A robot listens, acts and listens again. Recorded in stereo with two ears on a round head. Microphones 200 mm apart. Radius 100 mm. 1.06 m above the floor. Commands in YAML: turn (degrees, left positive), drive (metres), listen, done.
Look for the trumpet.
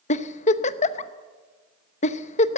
listen: true
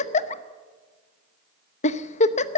listen: true
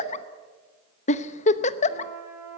turn: -30
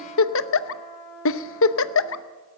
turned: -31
turn: 15
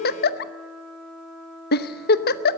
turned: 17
done: "Facing the trumpet."